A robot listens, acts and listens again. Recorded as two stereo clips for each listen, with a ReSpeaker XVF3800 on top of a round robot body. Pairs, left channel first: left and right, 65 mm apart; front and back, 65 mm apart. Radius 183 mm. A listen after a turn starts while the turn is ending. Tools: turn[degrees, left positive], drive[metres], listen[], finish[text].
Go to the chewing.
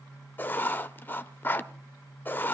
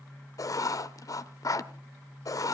Action: listen[]
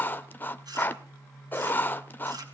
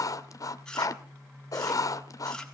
Thought: The chewing: 80° right.
Action: turn[-80]
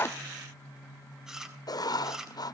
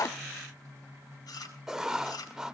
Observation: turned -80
Thought: The chewing is now 10° right.
Action: turn[-10]
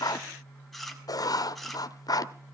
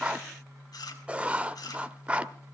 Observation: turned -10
Action: drive[1.0]
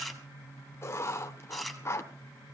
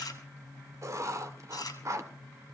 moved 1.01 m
Action: drive[1.0]
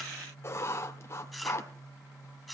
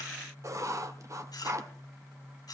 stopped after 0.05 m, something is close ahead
Action: finish[Blocked. The chewing is further on, straight ahead.]